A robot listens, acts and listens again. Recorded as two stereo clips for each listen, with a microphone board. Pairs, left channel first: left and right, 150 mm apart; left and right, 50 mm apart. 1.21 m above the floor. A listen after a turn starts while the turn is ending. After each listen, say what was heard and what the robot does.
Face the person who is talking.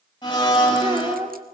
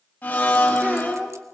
The child speaking: about 25° right or 155° right. Turn 25° right.
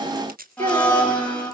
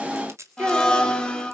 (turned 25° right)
So it is at 130° right. Turn 130° right.
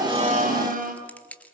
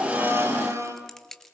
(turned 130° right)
Keep listening.
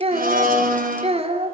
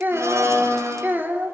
The child speaking is now 40° right. Turn 40° right.
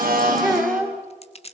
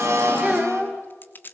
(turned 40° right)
Facing the child speaking.